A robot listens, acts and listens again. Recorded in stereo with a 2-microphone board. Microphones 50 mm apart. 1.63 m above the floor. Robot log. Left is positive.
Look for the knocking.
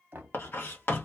note: The knocking: about 45° right or 135° right.
cmd yaw -45
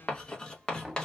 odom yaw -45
end: Found it: knocking, straight ahead.